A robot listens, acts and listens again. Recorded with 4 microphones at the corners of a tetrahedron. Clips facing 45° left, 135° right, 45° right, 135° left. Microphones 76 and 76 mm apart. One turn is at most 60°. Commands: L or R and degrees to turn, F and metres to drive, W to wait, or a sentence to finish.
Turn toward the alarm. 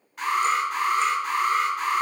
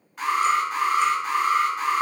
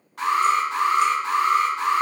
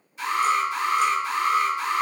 R45
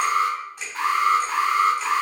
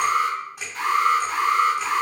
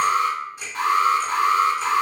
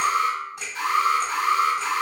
Found it: an alarm, straight ahead.